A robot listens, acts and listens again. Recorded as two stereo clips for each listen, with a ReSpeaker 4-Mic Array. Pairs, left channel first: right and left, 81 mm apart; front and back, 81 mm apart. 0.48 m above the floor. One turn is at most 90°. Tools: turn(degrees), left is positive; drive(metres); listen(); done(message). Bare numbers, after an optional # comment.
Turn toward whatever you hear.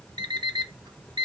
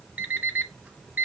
# The alarm clock: 110° left.
turn(90)
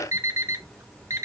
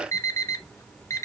# The alarm clock is now 50° left.
turn(50)
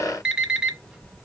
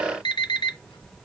# The alarm clock is now 10° left.
turn(10)
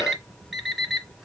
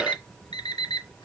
done("Facing the alarm clock, 1 to 2 m away.")